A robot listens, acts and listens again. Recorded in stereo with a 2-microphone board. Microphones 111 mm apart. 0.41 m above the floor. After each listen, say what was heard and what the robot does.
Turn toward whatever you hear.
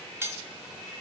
The cutlery clinking: about 20° right or 160° right. Turn 20° right.
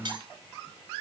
So it is at 135° right. Turn 135° right.
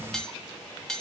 Found it: cutlery clinking, straight ahead.